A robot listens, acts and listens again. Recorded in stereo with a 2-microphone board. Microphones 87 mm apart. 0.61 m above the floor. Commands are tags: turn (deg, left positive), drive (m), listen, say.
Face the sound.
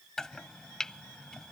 <turn deg="30"/>
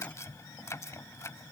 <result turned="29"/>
<turn deg="145"/>
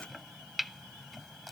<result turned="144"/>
<say>Found it: chopping, straight ahead.</say>